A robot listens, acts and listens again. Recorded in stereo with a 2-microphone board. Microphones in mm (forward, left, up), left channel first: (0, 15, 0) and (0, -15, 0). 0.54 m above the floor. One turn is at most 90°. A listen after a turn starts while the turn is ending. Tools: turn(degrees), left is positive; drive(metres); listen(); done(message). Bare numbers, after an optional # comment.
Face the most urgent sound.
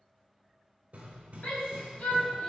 # The shout: about 70° left or 110° left.
turn(70)
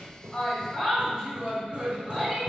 # So it is at 15° left.
turn(15)
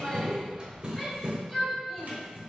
done("Facing the shout, 1 to 2 m away.")